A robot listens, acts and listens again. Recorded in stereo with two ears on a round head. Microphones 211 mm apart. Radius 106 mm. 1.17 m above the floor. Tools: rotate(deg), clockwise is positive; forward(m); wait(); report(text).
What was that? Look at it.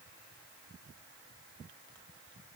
wait()
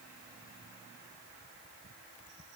wait()
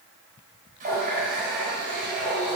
rotate(35)
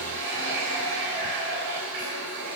rotate(110)
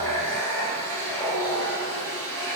rotate(-10)
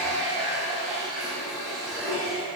report("Found it: a running tap, straight ahead, 2 to 4 m away.")